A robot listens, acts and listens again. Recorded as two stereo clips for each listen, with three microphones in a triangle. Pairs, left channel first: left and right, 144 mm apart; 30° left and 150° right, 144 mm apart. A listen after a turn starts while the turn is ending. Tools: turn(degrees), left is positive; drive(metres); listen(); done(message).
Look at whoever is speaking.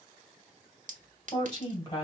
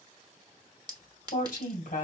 turn(degrees=35)
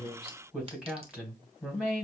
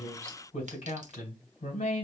turn(degrees=-10)
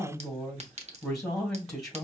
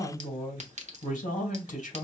done("Facing the woman speaking.")